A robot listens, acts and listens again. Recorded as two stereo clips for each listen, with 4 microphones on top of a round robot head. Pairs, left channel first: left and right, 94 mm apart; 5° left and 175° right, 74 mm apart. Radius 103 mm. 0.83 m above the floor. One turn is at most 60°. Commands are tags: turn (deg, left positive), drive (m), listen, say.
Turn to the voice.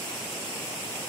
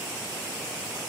<listen/>
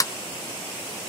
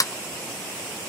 <listen/>
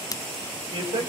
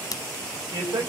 <turn deg="-60"/>
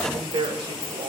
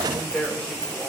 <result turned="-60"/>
<turn deg="-60"/>
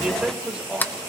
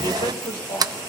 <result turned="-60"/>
<turn deg="-10"/>
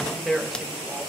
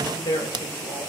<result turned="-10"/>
<say>Found it: a man speaking, straight ahead, 2 to 4 m away.</say>